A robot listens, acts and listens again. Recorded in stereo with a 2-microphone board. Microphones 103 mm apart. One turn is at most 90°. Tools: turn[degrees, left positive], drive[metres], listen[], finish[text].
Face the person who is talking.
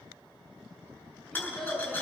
Action: turn[30]
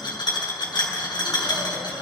Action: listen[]
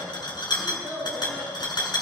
Thought: So it is at 20° right.
Action: turn[-20]
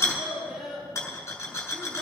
Action: finish[Facing the child speaking.]